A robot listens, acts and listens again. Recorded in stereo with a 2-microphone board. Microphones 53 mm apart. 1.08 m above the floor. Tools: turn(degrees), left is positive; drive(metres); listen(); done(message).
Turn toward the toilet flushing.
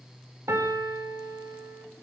listen()
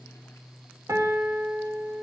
listen()
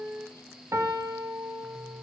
done("I can't make out a toilet flushing to turn to.")